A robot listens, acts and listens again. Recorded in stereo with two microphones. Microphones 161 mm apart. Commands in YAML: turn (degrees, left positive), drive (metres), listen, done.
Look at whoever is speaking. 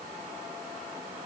listen: true
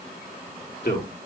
turn: 90
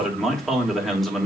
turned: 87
done: "Facing the man speaking, 2 to 4 m away."